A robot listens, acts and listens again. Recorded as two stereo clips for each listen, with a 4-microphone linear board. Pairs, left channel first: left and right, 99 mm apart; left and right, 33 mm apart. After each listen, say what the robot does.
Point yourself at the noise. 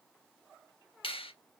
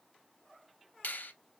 Turn 70° left.
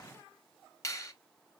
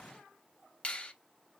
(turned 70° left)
Turn 35° left.
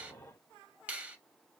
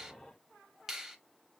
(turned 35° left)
Turn 15° right.
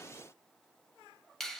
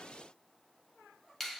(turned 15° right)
Found it: a finger snap, straight ahead.